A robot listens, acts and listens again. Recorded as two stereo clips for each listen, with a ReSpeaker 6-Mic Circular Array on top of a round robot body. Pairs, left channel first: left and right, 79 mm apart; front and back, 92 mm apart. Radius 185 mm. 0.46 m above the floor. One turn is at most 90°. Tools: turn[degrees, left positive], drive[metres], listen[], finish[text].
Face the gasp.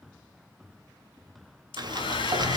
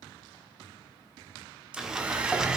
Action: listen[]
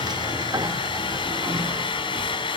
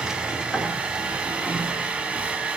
Action: listen[]
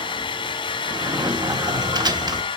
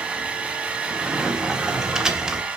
Action: finish[I can't make out a gasp, only a sliding door and a hair dryer.]